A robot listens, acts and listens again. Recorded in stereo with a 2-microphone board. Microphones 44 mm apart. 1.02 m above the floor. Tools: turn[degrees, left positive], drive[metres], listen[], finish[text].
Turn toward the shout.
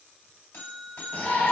Thought: The shout: about 35° left or 145° left.
Action: turn[35]
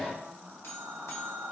Action: finish[Facing the shout, under 1 m away.]